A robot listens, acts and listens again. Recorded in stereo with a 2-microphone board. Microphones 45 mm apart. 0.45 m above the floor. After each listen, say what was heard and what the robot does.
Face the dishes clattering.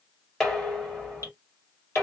Turn 30° left.
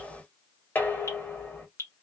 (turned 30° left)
So it is at 140° left. Turn 140° left.
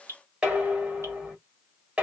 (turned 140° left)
The dishes clattering is now 25° right. Turn 25° right.
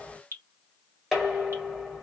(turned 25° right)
Found it: dishes clattering, straight ahead, 1 to 2 m away.